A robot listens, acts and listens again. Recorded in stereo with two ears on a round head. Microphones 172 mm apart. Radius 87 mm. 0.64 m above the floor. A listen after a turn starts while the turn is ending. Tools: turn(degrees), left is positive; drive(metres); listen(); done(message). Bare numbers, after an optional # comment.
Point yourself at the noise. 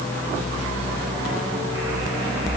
listen()
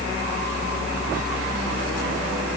listen()
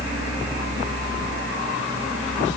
done("I can't make out anything to turn to.")